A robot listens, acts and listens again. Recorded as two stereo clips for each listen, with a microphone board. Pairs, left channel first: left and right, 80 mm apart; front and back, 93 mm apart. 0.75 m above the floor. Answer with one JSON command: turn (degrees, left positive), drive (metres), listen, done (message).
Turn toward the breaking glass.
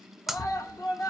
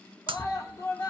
{"turn": -175}
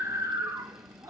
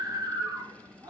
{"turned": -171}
{"done": "Facing where the breaking glass came from. I can't hear it now."}